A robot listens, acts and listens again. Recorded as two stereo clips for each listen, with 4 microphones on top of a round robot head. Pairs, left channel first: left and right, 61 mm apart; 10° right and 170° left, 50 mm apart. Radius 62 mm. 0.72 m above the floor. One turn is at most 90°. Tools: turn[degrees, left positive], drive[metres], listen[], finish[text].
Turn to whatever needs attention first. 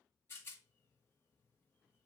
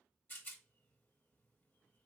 Action: listen[]
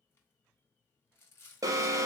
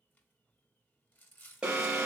Thought: The alarm: 110° right.
Action: turn[-90]
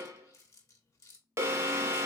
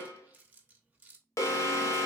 Thought: The alarm is now 40° right.
Action: turn[-40]
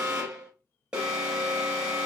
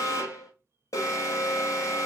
Thought: The alarm is now 15° right.
Action: turn[-15]
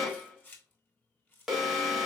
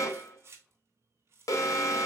Action: finish[Facing the alarm, under 1 m away.]